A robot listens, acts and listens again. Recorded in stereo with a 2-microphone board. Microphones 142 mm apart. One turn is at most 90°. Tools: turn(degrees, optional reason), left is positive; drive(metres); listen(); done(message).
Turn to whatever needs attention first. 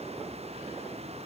listen()
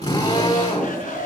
turn(degrees=65, reason="The shout: about 65° left or 115° left.")
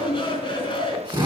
turn(degrees=40, reason="So it is at 40° left.")
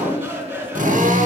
turn(degrees=-10, reason="The shout is now 10° right.")
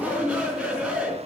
done("Found it: a shout, straight ahead.")